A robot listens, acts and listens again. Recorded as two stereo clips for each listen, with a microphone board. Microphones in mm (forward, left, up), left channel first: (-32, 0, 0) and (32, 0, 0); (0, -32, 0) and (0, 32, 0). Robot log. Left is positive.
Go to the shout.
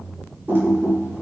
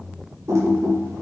cmd idle
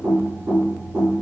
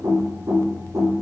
cmd idle
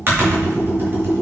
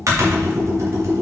end: I can't make out a shout to turn to.